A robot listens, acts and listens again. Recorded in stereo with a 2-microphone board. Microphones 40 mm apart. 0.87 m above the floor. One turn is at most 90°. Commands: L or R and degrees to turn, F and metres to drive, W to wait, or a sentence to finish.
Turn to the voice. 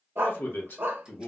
L60
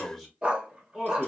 Facing the man speaking, 1 to 2 m away.